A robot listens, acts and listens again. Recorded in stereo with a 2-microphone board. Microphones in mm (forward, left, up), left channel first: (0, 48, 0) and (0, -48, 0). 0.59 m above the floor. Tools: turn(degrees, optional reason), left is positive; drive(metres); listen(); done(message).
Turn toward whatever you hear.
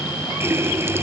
turn(degrees=-25, reason="The running tap: about 25° right or 155° right.")
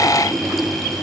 done("Found it: a running tap, straight ahead.")